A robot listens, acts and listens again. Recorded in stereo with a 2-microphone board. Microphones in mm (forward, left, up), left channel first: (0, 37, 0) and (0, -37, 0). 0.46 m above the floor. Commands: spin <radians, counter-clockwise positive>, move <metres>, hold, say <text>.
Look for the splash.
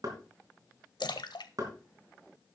spin 1.31
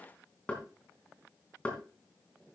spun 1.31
hold
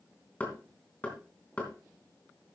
say I heard a splash, but can't make it out now. It was about straight ahead or 30° left.